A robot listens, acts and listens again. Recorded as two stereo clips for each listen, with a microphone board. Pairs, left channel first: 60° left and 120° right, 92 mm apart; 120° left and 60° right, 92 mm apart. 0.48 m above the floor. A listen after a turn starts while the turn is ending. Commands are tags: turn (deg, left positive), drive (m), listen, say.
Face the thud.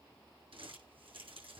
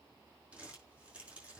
<listen/>
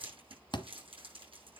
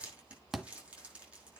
<turn deg="25"/>
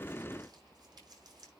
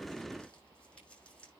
<say>Facing where the thud came from. I can't hear it now.</say>